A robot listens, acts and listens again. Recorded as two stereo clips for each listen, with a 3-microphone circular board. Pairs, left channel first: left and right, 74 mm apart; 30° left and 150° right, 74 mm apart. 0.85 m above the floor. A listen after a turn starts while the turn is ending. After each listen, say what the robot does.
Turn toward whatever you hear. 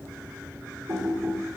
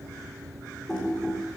Turn 55° right.
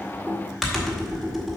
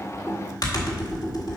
Facing the typing on a keyboard.